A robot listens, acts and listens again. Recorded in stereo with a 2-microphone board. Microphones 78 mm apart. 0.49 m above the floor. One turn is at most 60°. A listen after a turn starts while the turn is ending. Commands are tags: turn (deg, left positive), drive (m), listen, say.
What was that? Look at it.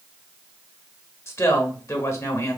<turn deg="35"/>
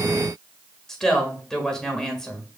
<say>Facing the woman speaking, 1 to 2 m away.</say>